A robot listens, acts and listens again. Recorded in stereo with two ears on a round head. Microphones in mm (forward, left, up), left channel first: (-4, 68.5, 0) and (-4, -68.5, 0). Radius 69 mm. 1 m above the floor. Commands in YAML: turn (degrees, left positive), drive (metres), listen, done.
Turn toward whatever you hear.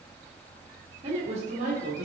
turn: -50
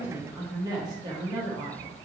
turn: -40
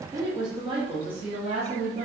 turn: -45
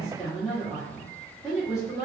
done: "Facing the woman speaking."